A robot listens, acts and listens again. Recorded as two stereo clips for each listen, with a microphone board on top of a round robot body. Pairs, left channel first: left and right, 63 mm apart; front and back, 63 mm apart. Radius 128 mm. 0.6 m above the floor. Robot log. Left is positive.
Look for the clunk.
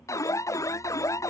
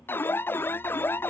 cmd idle
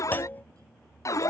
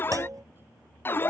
note: The clunk: 155° left.
cmd yaw +155
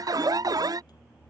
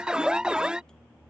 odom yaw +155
end: Facing where the clunk came from. I can't hear it now.